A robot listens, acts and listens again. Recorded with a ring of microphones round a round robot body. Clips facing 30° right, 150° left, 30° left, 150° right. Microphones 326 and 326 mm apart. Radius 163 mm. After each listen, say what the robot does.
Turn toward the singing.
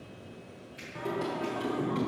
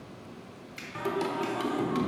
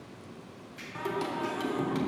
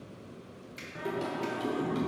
Turn 95° left.
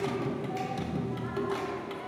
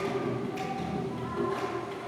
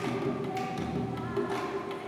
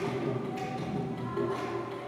Turn 10° right.
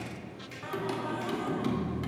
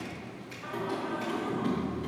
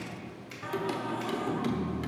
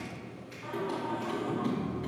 Found it: singing, straight ahead.